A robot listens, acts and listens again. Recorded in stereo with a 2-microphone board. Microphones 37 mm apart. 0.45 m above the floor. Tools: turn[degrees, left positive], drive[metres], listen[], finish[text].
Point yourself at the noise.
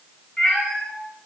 Thought: The cat meowing: about 20° left or 160° left.
Action: turn[20]
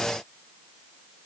Action: listen[]
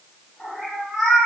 Action: turn[30]
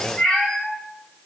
Thought: The cat meowing: about 20° left or 160° left.
Action: turn[20]
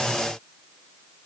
Action: listen[]
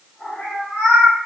Thought: The cat meowing: about 20° left or 160° left.
Action: turn[20]
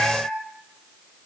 Thought: So it is at 140° left.
Action: turn[140]
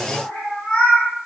Thought: The cat meowing is now 30° left.
Action: turn[30]
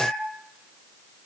Action: finish[Found it: a cat meowing, straight ahead, 1 to 2 m away.]